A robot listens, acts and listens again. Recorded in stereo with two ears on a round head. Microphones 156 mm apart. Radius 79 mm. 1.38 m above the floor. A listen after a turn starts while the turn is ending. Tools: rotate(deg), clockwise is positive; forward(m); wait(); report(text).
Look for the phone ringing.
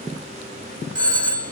rotate(25)
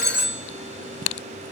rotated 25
report("Found it: a phone ringing, straight ahead, 2 to 4 m away.")